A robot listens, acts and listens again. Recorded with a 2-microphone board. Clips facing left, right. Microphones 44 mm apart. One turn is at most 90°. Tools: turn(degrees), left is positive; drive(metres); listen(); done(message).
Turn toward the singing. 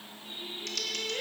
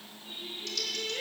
turn(degrees=20)
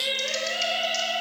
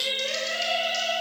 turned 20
turn(degrees=35)
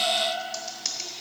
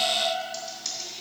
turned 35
turn(degrees=90)
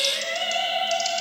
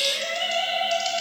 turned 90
turn(degrees=25)
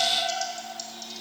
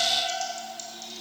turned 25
done("Found it: singing, straight ahead, over 4 m away.")